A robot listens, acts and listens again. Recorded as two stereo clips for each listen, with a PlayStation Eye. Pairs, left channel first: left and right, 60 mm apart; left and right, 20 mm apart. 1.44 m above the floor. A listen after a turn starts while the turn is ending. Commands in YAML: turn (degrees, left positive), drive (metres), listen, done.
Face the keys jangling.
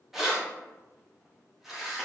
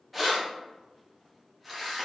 turn: -30
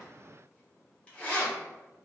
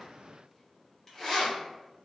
turn: 25
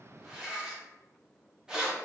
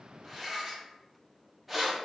turn: -15
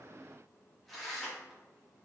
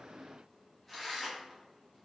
done: "Facing the keys jangling."